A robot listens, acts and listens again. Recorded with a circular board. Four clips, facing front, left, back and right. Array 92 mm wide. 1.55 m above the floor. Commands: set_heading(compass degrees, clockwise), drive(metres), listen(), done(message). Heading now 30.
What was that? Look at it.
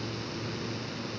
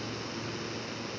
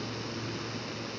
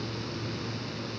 listen()
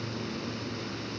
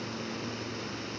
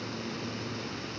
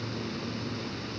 listen()
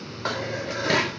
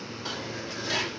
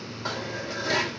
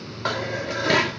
set_heading(90)
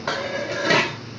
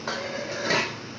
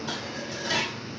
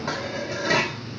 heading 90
done("Facing the dishes clattering, 1 to 2 m away.")